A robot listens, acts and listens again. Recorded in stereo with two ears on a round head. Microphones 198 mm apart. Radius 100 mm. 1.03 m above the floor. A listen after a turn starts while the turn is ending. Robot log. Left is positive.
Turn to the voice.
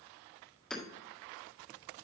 cmd idle
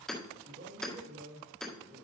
note: The man speaking: about 50° right or 130° right.
cmd yaw -50
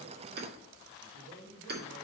note: So it is at 80° right.
cmd yaw -80
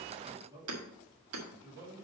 note: The man speaking is now 20° right.
cmd yaw -20
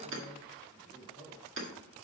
end: Facing the man speaking, 2 to 4 m away.